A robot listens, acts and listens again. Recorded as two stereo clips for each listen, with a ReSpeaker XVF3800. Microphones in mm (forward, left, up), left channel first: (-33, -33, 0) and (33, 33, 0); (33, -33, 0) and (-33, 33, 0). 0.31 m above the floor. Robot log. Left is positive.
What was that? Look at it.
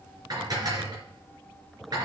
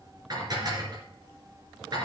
note: The dishes clattering: 90° left.
cmd yaw +90
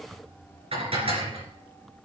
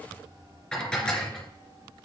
note: The dishes clattering is now 35° left.
cmd yaw +35
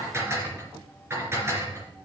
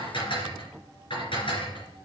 note: The dishes clattering is now 15° right.
cmd yaw -15
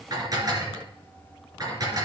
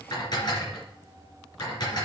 end: Found it: dishes clattering, straight ahead, 2 to 4 m away.